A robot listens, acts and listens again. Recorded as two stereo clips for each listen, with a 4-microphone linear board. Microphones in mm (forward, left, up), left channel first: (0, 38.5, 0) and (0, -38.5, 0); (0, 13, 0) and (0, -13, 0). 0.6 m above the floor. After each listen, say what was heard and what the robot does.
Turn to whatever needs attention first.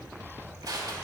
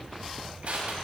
Keep listening.
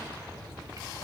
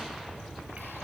Keep listening.
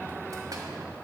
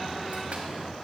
I can't make out anything urgent, only crushing.